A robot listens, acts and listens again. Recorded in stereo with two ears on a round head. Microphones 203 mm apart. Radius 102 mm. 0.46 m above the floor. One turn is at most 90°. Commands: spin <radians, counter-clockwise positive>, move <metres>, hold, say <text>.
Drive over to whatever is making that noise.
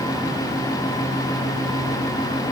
hold
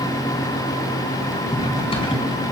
spin 0.44
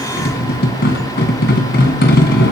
spin 1.57
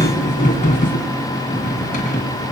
spin 0.61
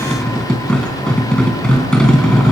move 1.0
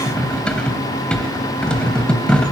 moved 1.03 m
move 1.0
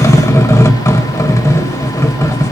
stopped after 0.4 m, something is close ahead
spin 0.26
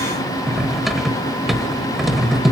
say I am next to the cutlery clinking.